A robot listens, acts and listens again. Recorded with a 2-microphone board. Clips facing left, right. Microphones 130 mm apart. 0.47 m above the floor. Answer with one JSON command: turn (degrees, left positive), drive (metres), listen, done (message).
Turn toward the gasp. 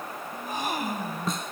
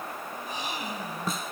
{"turn": 50}
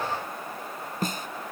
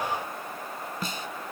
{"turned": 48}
{"listen": true}
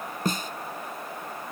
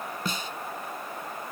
{"done": "I heard a gasp, but can't make it out now. It was about 5° left or 80° left."}